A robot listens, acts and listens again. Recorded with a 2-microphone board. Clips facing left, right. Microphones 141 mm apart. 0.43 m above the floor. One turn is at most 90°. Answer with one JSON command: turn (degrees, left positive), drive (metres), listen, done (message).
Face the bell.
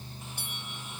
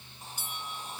{"turn": 60}
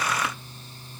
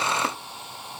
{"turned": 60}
{"listen": true}
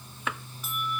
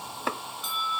{"done": "Found it: a bell, straight ahead."}